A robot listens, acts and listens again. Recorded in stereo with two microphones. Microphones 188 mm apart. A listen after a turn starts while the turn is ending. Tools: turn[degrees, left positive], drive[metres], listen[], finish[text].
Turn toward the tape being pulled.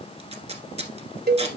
Thought: The tape being pulled: about 35° right or 145° right.
Action: turn[-35]
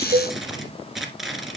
Action: finish[Facing the tape being pulled, 1 to 2 m away.]